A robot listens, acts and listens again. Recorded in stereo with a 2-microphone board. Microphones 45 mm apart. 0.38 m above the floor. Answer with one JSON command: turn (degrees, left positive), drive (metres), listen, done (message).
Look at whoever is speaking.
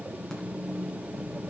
{"listen": true}
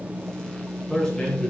{"turn": 15}
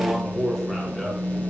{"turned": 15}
{"done": "Found it: a man speaking, straight ahead."}